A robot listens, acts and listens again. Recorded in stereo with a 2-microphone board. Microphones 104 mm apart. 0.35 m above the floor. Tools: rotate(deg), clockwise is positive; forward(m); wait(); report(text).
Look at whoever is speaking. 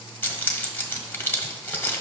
wait()
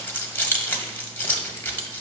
wait()
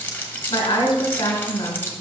rotate(-45)
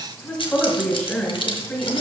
report("Facing the woman speaking, 2 to 4 m away.")